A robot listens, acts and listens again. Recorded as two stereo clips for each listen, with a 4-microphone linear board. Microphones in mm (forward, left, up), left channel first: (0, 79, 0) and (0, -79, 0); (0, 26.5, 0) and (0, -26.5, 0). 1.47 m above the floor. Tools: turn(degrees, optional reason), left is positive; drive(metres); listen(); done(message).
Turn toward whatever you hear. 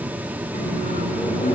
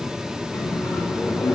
turn(degrees=90)
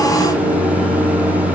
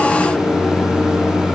done("Facing the microwave.")